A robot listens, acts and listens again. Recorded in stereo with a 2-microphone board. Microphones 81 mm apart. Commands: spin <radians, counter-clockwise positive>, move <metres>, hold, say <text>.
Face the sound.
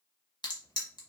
spin 1.13
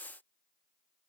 hold
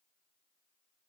say I heard a crack, but can't make it out now. It was about straight ahead or 50° left.